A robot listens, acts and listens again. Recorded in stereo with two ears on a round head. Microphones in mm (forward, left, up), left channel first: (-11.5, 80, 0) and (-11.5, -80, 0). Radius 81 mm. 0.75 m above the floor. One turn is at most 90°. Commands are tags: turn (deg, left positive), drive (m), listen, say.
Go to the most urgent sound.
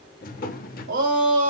<turn deg="-75"/>
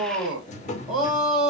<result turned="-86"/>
<drive m="1.0"/>
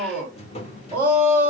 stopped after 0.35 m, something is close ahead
<turn deg="-10"/>
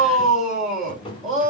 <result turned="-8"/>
<say>Blocked. The shout is further on, straight ahead.</say>